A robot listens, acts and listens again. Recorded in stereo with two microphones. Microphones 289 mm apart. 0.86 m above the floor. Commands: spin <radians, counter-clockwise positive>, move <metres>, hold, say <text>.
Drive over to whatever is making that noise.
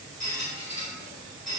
spin -1.13
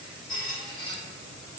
move 1.0
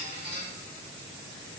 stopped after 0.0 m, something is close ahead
say Something is in my way. I am facing the squeak but have not reached it.